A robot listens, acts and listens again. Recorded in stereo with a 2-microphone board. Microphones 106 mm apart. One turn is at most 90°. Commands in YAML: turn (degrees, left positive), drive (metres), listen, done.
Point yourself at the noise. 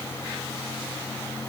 listen: true
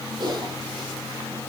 turn: -45
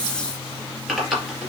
done: "Found it: typing on a keyboard, straight ahead."